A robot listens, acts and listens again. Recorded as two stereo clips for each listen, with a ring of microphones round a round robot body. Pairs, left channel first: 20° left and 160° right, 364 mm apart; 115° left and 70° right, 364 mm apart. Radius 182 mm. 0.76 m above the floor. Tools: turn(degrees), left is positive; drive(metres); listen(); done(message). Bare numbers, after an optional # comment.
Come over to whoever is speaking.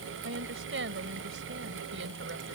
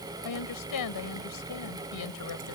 # The woman speaking: 145° left.
turn(145)
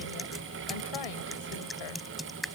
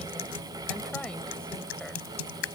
listen()
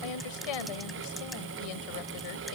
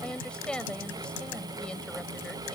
# The woman speaking is now 25° left.
turn(25)
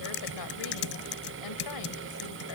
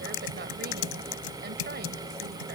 listen()
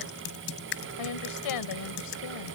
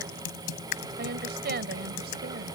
drive(1.0)
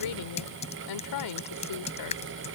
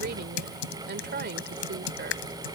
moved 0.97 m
drive(1.0)
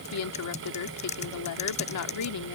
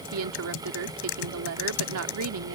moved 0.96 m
# The woman speaking is now 20° right.
turn(-20)
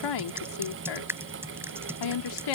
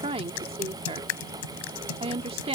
drive(1.0)
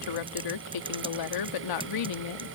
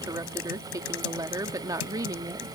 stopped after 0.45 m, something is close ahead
# The woman speaking is now 10° left.
turn(10)
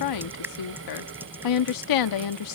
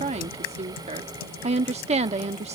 done("Arrived at the woman speaking, straight ahead.")